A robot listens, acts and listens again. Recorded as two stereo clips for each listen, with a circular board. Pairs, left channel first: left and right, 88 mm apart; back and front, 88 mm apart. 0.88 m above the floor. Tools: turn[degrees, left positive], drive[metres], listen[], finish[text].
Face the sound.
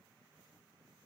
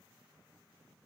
Action: listen[]
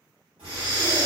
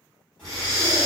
Thought: The breathing: 95° right.
Action: turn[-95]
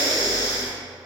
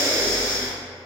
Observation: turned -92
Action: finish[Found it: breathing, straight ahead.]